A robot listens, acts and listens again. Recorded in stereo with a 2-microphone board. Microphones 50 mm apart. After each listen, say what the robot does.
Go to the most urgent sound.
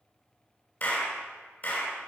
Keep listening.
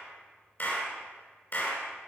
Keep listening.
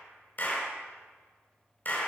I can't make out anything urgent to turn to.